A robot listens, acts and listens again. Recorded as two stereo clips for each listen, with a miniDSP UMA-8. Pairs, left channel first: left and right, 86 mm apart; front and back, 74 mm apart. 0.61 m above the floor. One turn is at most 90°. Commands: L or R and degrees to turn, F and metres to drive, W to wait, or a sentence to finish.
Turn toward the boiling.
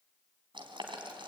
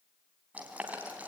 R90
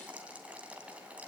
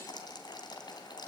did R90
R15
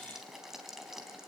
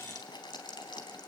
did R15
Found it: boiling, straight ahead.